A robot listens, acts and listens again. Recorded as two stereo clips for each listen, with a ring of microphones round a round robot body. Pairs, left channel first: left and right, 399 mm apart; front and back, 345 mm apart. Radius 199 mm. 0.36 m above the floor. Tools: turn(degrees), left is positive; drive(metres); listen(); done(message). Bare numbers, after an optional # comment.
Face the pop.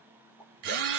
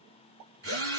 # The pop: 175° left.
turn(175)
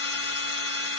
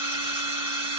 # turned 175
done("I heard a pop from this way, but can't make it out now.")